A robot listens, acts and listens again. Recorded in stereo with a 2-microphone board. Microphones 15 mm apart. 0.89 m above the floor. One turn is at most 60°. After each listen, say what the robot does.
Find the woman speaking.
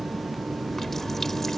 Keep listening.
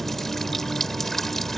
Keep listening.
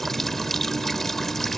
I can't make out a woman speaking to turn to.